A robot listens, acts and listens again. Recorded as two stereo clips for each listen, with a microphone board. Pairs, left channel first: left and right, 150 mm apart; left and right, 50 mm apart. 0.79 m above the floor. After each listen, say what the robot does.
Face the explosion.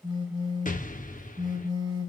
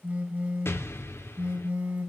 Turn 60° left.
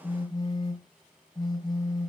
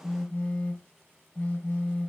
Keep listening.
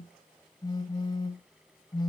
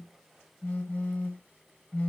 I heard an explosion, but can't make it out now. It was about straight ahead or 60° left.